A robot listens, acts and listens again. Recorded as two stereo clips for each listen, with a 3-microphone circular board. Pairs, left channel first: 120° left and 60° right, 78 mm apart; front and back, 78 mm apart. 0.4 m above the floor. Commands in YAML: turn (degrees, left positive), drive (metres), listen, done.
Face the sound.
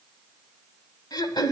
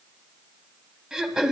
turn: 100
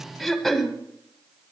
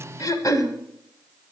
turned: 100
turn: 35
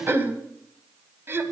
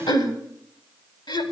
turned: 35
done: "Facing the throat clearing, 1 to 2 m away."